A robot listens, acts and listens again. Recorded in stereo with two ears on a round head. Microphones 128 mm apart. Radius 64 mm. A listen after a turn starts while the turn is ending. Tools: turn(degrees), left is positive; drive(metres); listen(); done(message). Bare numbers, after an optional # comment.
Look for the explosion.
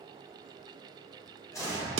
# The explosion: about 20° left or 160° left.
turn(20)
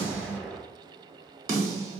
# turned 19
done("Facing the explosion.")